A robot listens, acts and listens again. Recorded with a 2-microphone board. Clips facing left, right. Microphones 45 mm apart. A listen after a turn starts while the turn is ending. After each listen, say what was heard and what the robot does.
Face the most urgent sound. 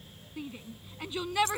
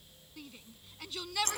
The shout: about 25° left or 155° left. Turn 25° left.
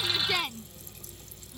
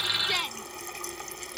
Facing the shout.